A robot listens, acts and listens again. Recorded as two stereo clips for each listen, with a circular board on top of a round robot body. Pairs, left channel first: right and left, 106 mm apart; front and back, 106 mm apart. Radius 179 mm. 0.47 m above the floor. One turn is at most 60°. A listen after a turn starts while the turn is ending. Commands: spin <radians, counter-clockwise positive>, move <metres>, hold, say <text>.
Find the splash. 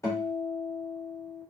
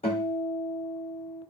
hold
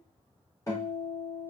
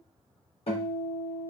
hold
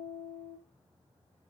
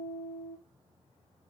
say I can't make out a splash to turn to.